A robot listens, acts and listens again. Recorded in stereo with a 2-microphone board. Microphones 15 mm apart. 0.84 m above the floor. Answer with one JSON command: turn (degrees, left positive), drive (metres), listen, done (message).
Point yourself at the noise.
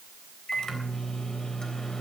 {"turn": 45}
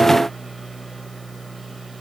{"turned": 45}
{"done": "Found it: a microwave, straight ahead."}